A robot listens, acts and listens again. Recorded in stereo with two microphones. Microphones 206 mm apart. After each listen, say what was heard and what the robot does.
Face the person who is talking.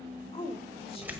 The woman speaking: about 25° left or 155° left. Turn 25° left.
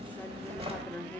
So it is at 10° left. Turn 10° left.
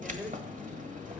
Keep listening.
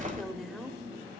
Facing the woman speaking.